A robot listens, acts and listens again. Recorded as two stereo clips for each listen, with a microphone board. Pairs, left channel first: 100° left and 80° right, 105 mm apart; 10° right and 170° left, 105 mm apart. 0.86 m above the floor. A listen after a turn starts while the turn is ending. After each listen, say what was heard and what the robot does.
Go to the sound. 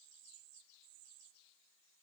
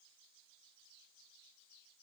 Keep listening.
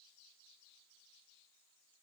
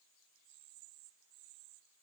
Keep listening.
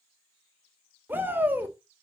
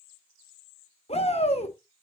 Drive 1.0 m forward.
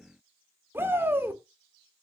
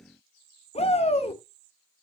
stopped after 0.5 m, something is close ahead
The shout is now 10° right. Turn 10° right.
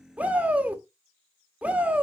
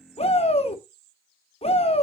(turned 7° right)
Something is in my way. I am facing the shout but have not reached it.